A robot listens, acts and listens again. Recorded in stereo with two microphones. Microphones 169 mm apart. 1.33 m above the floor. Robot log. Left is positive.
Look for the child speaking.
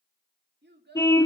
cmd yaw -90
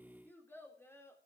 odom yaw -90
note: So it is at 15° left.
cmd yaw +15
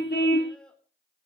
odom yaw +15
end: Facing the child speaking, 2 to 4 m away.